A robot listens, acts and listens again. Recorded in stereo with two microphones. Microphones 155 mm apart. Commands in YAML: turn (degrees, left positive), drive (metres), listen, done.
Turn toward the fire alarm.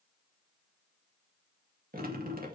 listen: true
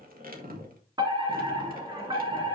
turn: -25
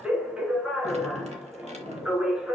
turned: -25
done: "Found it: a fire alarm, straight ahead, 2 to 4 m away."